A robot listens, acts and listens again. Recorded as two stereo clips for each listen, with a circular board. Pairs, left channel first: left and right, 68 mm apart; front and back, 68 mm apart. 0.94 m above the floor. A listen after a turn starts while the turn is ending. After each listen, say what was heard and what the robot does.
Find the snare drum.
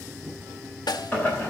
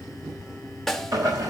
The snare drum: 85° left. Turn 85° left.
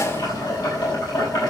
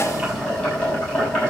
Keep listening.
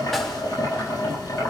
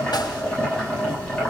Keep listening.
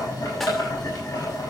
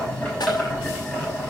Facing where the snare drum came from. I can't hear it now.